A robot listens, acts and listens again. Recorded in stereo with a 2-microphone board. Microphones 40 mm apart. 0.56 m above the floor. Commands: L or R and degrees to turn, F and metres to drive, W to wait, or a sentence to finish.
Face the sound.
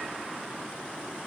W
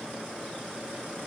W
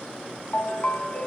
L40
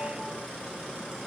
W
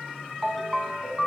Facing the ringtone, 2 to 4 m away.